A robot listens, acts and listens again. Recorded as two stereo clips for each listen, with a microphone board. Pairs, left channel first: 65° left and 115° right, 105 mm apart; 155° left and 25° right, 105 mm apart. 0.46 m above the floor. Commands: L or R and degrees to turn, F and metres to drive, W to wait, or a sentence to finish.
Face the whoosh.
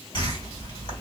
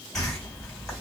L70
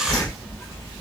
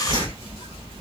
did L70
R20
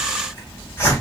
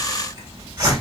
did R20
Facing the whoosh, 1 to 2 m away.